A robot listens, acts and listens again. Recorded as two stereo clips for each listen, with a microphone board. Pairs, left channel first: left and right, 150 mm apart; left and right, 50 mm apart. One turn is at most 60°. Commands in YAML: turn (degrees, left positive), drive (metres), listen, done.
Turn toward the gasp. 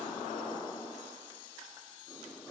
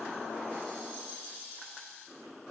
listen: true
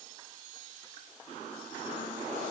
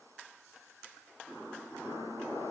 listen: true
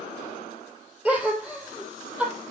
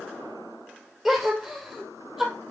turn: -30
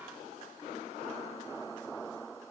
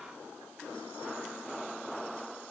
listen: true
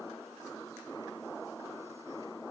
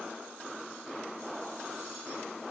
done: "I heard a gasp, but can't make it out now. It was about 20° left or 140° right."